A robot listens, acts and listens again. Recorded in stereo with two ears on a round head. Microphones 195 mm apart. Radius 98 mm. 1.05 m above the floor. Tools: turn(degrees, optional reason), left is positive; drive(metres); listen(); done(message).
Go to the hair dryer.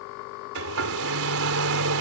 turn(degrees=-65, reason="The hair dryer: about 65° right or 115° right.")
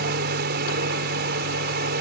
turn(degrees=-45, reason="So it is at 45° right.")
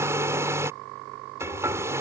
turn(degrees=-15, reason="The hair dryer is now 15° right.")
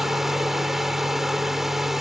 drive(metres=1.0)
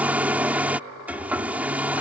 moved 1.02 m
drive(metres=1.0)
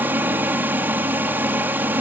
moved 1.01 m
turn(degrees=-10, reason="The hair dryer is now 10° right.")
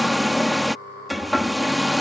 drive(metres=1.0)
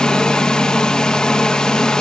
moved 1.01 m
drive(metres=1.0)
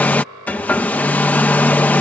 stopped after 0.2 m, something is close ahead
turn(degrees=10, reason="The hair dryer is now 10° left.")
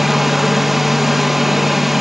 done("Arrived at the hair dryer, straight ahead.")